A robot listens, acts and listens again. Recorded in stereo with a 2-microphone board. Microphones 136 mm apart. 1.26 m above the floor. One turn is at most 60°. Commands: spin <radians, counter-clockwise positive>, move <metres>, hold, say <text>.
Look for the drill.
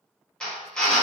spin 0.52
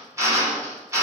spin -0.44
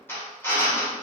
spin 0.26
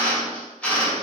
spin 0.17
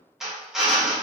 say Found it: a drill, straight ahead.